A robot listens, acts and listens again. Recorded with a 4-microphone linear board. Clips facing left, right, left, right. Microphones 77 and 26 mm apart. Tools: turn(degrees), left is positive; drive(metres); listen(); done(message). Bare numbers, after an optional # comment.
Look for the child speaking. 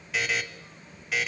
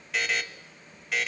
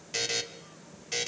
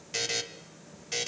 listen()
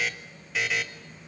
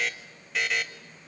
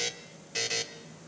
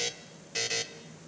listen()
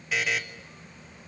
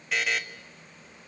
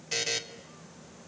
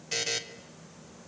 done("I can't make out a child speaking to turn to.")